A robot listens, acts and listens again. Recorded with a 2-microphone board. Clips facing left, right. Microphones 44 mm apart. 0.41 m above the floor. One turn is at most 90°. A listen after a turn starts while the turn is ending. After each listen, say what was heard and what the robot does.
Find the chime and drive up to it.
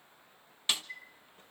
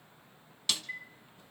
The chime: about 65° right or 115° right. Turn 65° right.
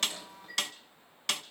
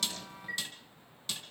So it is at 50° right. Turn 50° right.
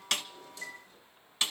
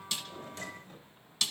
Keep listening.
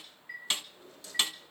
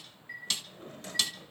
Drive 1.0 m forward.
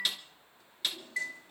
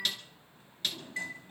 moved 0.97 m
The chime is now 15° left. Turn 15° left.
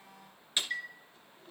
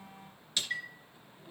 Drive 1.0 m forward.
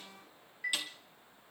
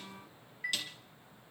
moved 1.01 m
The chime is now 10° right. Turn 10° right.
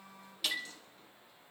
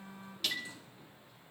Drive 1.0 m forward.
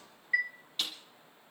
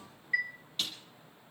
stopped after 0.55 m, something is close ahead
Arrived at the chime, straight ahead.